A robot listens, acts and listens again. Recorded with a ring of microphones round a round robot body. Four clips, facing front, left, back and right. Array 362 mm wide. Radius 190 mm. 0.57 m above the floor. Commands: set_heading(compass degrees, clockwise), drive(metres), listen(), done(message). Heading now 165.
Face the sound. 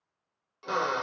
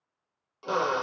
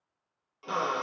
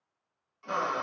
set_heading(85)
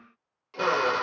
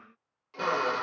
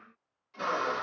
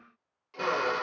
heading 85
done("Found it: a drill, straight ahead, 1 to 2 m away.")